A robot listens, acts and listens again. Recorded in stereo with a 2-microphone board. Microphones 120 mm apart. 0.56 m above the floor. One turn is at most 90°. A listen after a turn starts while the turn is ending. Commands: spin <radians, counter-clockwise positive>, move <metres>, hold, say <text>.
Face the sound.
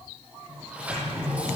spin -0.52
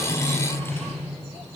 spin 0.35
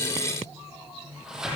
say Facing the sliding door, over 4 m away.